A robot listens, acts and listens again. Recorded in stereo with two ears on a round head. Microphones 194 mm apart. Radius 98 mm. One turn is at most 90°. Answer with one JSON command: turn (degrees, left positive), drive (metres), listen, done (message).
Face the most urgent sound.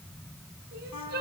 {"turn": -50}
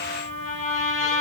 {"listen": true}
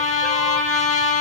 {"listen": true}
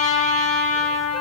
{"done": "I heard crying, but can't make it out now. It was about straight ahead or 80° right."}